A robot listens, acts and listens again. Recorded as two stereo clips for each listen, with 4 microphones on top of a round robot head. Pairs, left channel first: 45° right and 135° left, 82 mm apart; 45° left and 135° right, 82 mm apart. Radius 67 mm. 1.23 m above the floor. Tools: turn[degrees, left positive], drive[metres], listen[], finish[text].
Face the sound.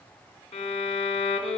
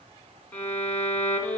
Thought: The violin: 25° right.
Action: turn[-25]
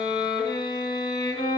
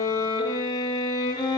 Action: finish[Found it: a violin, straight ahead, 2 to 4 m away.]